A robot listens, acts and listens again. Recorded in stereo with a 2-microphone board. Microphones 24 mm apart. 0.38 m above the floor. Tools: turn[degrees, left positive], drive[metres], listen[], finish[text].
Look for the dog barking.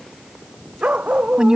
Action: turn[-90]
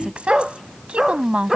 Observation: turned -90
Thought: So it is at 15° right.
Action: turn[-15]
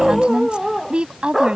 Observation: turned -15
Action: finish[Facing the dog barking.]